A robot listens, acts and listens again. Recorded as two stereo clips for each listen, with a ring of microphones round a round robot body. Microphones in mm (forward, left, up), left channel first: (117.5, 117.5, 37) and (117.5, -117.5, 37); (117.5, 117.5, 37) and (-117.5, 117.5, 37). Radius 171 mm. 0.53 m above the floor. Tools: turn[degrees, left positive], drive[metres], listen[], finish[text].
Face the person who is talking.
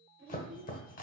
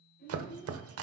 Thought: The child speaking: 55° right.
Action: turn[-55]
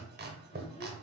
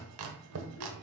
Action: listen[]
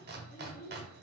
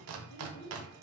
Thought: The child speaking is now 40° left.
Action: turn[40]
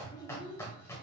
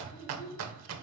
Thought: The child speaking is now 20° left.
Action: turn[20]
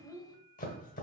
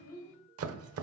Thought: The child speaking is now 15° left.
Action: turn[15]
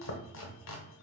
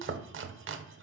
Action: listen[]
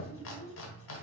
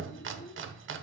Thought: The child speaking is now 10° left.
Action: turn[10]
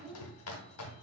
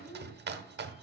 Action: finish[Facing the child speaking.]